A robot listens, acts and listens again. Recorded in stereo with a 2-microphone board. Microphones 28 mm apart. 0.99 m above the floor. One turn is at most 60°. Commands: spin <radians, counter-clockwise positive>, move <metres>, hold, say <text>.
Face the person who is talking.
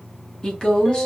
spin 0.35
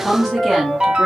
say Facing the woman speaking.